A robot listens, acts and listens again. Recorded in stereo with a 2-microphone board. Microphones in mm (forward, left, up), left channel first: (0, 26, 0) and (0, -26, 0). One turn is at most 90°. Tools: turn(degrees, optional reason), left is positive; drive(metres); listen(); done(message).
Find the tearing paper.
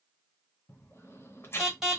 turn(degrees=55, reason="The tearing paper: about 55° left or 125° left.")
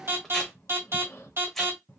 listen()
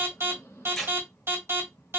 turn(degrees=10, reason="So it is at 10° left.")
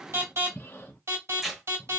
done("Facing the tearing paper, under 1 m away.")